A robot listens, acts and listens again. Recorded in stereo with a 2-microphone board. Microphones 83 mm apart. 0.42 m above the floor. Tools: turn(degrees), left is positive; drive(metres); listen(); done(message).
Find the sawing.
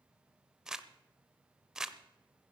listen()
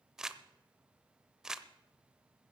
listen()
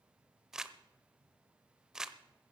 done("I can't make out sawing, only crumpling.")